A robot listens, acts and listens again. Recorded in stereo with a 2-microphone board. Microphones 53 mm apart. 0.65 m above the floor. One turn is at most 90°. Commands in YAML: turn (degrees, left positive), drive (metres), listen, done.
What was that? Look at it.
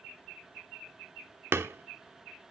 turn: -50
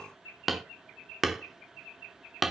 done: "Found it: hammering, straight ahead, under 1 m away."